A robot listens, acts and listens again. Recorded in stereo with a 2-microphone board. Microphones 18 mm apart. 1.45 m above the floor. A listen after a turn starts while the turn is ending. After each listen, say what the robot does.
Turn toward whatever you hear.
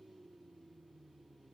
Keep listening.
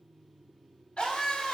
Turn 90° left.
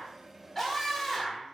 Found it: a scream, straight ahead, 2 to 4 m away.